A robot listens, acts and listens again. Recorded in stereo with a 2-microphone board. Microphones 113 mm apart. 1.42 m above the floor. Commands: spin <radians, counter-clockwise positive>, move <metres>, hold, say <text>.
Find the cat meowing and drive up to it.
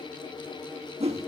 hold
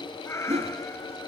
spin 0.44
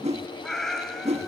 move 1.0
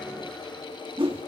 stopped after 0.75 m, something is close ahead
hold
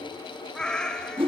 spin 0.17
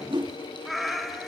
say I am next to the cat meowing.